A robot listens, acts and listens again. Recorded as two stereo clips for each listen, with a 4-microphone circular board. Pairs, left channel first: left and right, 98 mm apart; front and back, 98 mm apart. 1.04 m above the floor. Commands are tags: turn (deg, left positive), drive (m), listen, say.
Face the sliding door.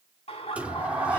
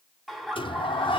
<turn deg="-15"/>
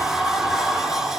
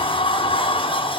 <say>Facing the sliding door.</say>